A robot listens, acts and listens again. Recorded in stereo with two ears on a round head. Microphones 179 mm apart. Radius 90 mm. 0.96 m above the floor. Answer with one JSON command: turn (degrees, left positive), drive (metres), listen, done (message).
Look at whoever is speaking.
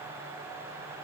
{"listen": true}
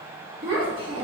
{"turn": -25}
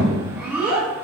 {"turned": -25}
{"done": "Found it: a child speaking, straight ahead, under 1 m away."}